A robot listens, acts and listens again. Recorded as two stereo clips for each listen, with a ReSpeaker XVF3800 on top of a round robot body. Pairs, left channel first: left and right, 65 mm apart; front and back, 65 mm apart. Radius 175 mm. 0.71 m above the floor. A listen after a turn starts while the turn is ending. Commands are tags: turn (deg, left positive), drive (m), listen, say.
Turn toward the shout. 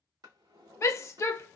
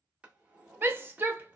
<turn deg="130"/>
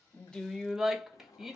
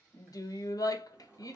<say>Found it: a shout, straight ahead.</say>